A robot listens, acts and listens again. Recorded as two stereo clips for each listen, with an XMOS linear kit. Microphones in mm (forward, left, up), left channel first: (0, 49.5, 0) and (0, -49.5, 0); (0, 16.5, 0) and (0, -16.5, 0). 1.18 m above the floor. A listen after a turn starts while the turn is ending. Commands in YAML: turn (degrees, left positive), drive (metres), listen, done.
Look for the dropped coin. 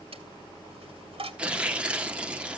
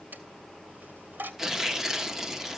turn: -75
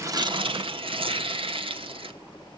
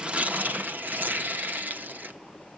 listen: true
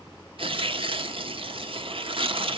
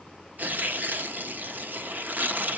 done: "I heard a dropped coin, but can't make it out now. It was about straight ahead or 30° right."